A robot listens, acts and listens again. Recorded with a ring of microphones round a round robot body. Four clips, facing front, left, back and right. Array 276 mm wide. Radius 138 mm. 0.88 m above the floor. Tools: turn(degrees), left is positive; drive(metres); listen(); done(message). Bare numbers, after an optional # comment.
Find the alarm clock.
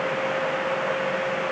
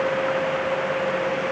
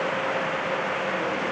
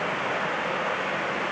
listen()
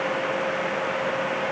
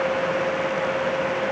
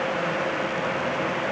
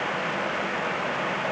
listen()
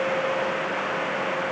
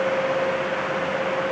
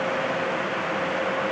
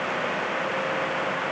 done("I can't make out an alarm clock.")